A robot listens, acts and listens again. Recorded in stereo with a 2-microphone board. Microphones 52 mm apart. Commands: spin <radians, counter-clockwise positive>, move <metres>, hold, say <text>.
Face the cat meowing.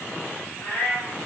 spin 0.79
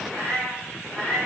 spin 0.52
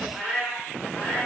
spin 0.44
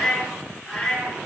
spin 0.17
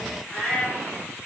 say Found it: a cat meowing, straight ahead.